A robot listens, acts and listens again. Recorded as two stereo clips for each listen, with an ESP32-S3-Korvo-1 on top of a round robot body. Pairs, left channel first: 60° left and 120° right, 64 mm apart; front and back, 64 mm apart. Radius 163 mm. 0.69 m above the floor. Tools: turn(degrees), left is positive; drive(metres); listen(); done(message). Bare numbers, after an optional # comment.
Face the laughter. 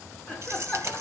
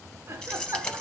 # The laughter: 125° left.
turn(125)
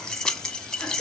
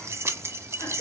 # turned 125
listen()
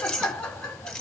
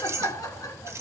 # The laughter is now 15° right.
turn(-15)
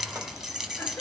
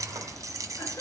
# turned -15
listen()
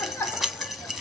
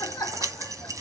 done("Facing the laughter, 2 to 4 m away.")